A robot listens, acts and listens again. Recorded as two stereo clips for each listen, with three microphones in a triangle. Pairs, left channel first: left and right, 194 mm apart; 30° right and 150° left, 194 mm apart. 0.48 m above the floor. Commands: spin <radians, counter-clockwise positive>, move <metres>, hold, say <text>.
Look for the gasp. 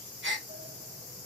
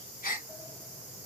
spin -1.31
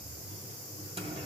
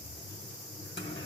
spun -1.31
say Facing where the gasp came from. I can't hear it now.